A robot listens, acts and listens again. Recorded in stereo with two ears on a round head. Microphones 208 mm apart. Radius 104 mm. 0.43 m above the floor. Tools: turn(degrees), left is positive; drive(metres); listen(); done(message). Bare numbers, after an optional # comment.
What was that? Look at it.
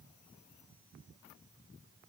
listen()
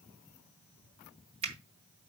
# The finger snap: about 30° right or 150° right.
turn(-30)
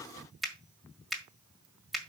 done("Found it: a finger snap, straight ahead, 1 to 2 m away.")